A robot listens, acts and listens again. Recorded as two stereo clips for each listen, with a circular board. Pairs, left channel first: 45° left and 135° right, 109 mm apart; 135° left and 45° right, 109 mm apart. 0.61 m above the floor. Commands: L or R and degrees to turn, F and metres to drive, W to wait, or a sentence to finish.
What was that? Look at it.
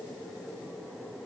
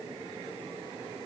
W
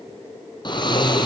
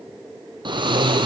Found it: snoring, straight ahead.